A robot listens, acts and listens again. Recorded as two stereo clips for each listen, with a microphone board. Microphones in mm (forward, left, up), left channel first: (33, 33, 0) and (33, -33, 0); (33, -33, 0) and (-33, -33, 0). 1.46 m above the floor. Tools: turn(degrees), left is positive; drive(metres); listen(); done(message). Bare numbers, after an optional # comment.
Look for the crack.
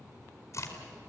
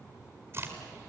# The crack: 130° left.
turn(130)
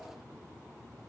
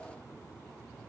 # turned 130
done("Facing where the crack came from. I can't hear it now.")